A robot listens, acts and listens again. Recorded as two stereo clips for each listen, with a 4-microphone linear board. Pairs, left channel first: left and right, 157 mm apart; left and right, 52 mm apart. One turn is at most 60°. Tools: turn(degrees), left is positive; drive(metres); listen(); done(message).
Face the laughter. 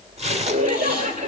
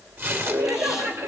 turn(degrees=-50)
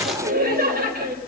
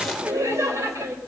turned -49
turn(degrees=-60)
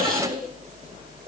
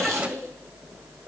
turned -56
turn(degrees=-20)
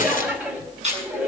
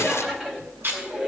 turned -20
turn(degrees=-10)
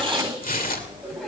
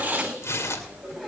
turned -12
listen()
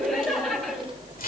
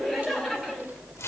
done("Found it: laughter, straight ahead.")